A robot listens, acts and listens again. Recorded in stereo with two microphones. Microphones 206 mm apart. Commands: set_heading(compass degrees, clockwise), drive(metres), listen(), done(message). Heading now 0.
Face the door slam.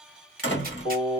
set_heading(300)
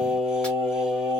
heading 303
listen()
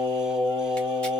done("I heard a door slam, but can't make it out now. It was about straight ahead or 65° left.")